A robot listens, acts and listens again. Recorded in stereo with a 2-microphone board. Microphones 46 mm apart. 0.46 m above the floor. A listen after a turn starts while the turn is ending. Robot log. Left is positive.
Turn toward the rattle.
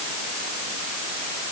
cmd idle
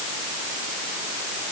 cmd idle
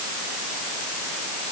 end: I can't make out a rattle to turn to.